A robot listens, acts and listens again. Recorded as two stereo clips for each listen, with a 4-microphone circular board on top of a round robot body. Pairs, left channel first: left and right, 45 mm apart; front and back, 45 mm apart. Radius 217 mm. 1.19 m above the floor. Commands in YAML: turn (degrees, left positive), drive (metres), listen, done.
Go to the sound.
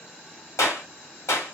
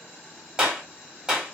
turn: 105
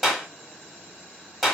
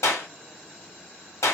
drive: 1.0
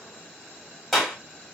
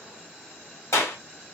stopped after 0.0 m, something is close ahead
turn: 10
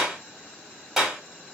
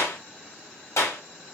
done: "Blocked. The clap is further on, straight ahead."